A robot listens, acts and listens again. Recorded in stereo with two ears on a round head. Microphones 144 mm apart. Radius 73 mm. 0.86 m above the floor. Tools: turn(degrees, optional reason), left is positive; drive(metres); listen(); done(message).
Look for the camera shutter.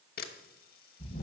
turn(degrees=60, reason="The camera shutter: about 60° left or 120° left.")
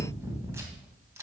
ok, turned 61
listen()
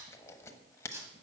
turn(degrees=20, reason="So it is at 20° left.")
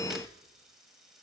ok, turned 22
listen()
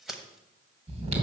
done("Found it: a camera shutter, straight ahead, 1 to 2 m away.")